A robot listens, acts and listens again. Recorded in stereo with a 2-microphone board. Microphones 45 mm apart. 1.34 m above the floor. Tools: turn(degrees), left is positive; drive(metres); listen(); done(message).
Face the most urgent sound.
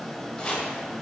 listen()
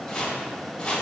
listen()
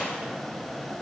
done("I can't make out anything urgent to turn to.")